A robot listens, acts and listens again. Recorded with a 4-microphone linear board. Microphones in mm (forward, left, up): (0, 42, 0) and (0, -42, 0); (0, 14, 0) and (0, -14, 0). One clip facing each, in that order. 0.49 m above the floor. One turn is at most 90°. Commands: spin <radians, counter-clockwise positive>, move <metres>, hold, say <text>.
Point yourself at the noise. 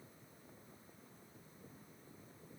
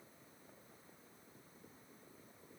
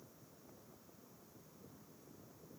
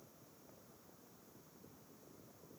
hold
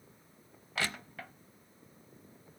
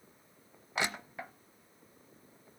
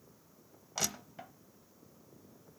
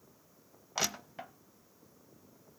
spin -0.35
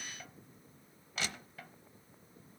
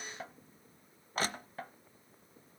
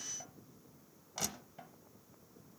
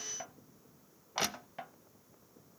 spin -1.57
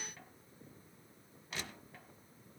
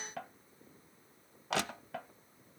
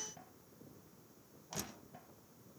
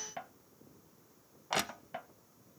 spin -1.48
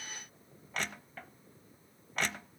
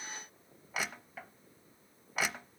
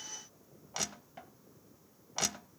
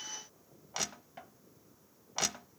say Found it: crushing, straight ahead, under 1 m away.